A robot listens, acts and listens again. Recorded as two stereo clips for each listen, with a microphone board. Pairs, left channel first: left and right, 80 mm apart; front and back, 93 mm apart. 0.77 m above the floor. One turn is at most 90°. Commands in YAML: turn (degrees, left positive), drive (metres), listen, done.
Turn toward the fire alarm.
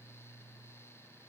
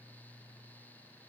listen: true
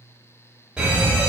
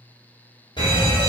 turn: -15
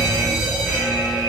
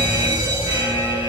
done: "Found it: a fire alarm, straight ahead."